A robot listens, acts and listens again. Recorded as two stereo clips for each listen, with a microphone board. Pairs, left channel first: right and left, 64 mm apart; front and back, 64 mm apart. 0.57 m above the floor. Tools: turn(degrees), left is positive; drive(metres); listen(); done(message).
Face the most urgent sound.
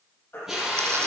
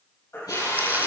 turn(degrees=-35)
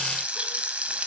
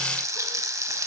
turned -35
listen()
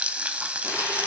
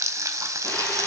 listen()
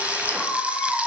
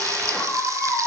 done("Facing the baby crying, over 4 m away.")